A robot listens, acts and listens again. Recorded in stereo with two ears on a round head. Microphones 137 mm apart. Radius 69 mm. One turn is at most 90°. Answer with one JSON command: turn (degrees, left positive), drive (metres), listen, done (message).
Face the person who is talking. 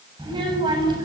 {"turn": -30}
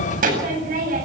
{"turn": -90}
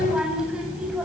{"done": "Facing the child speaking."}